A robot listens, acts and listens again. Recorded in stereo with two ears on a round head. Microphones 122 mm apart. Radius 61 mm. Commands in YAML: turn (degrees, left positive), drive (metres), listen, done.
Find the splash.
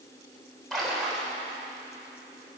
turn: 30
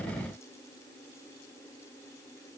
listen: true
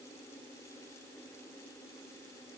done: "I heard a splash, but can't make it out now. It was about 30° right or 150° left."